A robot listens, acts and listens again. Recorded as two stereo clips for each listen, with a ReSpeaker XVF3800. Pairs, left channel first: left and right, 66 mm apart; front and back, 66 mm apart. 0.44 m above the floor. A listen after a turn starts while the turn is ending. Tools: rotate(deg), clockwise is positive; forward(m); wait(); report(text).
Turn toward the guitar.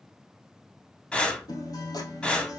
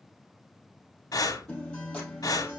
rotate(-75)
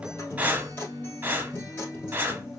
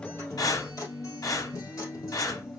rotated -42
rotate(-30)
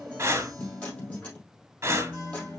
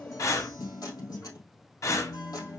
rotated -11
rotate(-20)
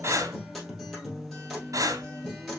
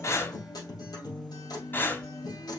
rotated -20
report("Facing the guitar, 2 to 4 m away.")